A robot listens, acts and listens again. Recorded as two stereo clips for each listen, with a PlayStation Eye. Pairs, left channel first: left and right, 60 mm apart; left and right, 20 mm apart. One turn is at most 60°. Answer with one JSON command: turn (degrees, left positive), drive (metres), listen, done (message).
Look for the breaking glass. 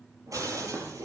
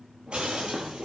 {"turn": -60}
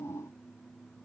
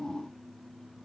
{"listen": true}
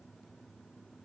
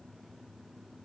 {"done": "I heard breaking glass, but can't make it out now. It was about straight ahead or 60° right."}